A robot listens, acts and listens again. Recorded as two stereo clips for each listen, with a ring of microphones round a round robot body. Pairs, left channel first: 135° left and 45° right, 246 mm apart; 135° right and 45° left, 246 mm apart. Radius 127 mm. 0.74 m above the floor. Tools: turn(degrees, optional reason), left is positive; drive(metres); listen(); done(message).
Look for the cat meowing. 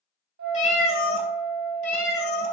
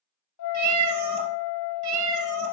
turn(degrees=80, reason="The cat meowing: 80° left.")
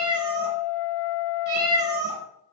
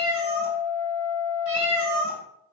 turn(degrees=10, reason="The cat meowing is now 10° left.")
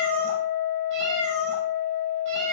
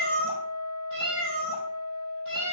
done("Found it: a cat meowing, straight ahead.")